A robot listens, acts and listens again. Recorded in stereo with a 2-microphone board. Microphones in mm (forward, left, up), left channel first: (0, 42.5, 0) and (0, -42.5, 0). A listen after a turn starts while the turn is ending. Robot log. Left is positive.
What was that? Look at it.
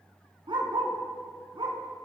note: The dog barking: about 75° right or 105° right.
cmd yaw -75
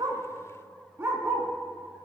note: So it is at 30° right.
cmd yaw -30
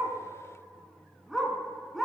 end: Facing the dog barking.